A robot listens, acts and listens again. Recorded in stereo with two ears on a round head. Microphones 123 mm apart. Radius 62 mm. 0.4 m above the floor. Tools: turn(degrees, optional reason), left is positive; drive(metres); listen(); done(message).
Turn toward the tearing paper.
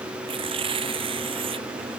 turn(degrees=-40, reason="The tearing paper: about 40° right or 140° right.")
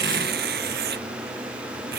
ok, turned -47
turn(degrees=-95, reason="So it is at 95° right.")
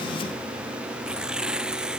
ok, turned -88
done("Found it: tearing paper, straight ahead.")